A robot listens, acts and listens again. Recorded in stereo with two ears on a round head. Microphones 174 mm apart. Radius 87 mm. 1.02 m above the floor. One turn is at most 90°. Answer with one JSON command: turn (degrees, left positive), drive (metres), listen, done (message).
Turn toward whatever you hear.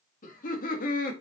{"turn": 45}
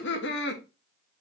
{"turn": 60}
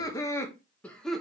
{"done": "Found it: laughter, straight ahead."}